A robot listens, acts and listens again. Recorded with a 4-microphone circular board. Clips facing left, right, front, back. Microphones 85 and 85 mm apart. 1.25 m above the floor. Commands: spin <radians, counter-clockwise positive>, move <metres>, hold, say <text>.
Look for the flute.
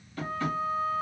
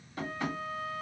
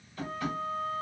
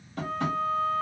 spin 2.79
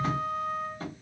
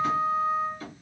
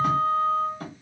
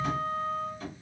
say Found it: a flute, straight ahead, 1 to 2 m away.